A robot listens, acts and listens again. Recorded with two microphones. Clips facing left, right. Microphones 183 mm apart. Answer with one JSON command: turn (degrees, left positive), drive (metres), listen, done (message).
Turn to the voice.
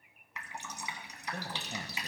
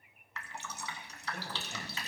{"turn": 35}
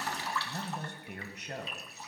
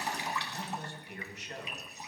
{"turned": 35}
{"turn": 105}
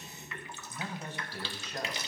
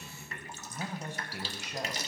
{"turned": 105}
{"turn": -15}
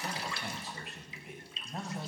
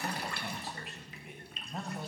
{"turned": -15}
{"done": "Facing the man speaking, 1 to 2 m away."}